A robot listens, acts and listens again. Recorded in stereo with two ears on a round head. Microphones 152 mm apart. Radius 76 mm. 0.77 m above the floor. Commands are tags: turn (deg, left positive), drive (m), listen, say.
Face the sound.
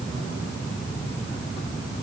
<listen/>
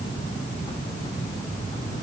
<listen/>
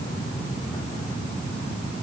<say>I can't make out anything to turn to.</say>